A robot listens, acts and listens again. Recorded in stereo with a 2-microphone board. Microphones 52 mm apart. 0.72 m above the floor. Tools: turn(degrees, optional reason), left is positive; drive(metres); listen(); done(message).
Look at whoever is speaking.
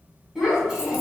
turn(degrees=-30)
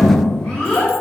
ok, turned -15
turn(degrees=20, reason="The child speaking: about 20° left or 160° left.")
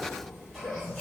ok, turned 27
done("Found it: a child speaking, straight ahead.")